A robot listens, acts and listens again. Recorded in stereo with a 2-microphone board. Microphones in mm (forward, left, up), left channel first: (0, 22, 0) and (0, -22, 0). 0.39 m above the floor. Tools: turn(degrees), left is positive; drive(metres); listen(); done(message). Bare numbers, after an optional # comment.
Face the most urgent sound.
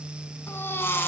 # The baby crying: about 65° left or 115° left.
turn(65)
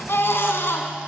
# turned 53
# So it is at 65° left.
turn(65)
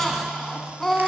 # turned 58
done("Found it: a baby crying, straight ahead, 1 to 2 m away.")